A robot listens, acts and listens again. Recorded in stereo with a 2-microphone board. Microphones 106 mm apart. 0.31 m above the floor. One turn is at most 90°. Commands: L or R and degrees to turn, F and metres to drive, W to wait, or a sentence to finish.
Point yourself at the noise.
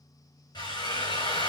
L45
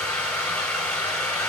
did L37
L10
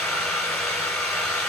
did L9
Found it: a drill, straight ahead, 2 to 4 m away.